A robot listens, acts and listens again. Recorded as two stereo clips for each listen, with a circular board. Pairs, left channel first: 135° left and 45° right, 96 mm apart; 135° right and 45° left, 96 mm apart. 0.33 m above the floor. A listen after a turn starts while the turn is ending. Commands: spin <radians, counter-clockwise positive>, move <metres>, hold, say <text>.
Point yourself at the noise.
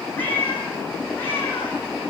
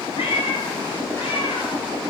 spin -2.71
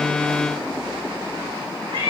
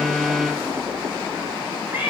spin -0.44
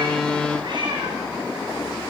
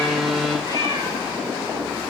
say Facing the cat meowing, over 4 m away.